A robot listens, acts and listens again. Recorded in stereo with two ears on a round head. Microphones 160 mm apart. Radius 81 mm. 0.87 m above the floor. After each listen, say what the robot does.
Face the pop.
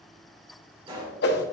Turn 30° right.
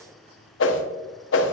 Keep listening.
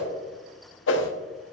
I heard a pop, but can't make it out now. It was about straight ahead or 120° right.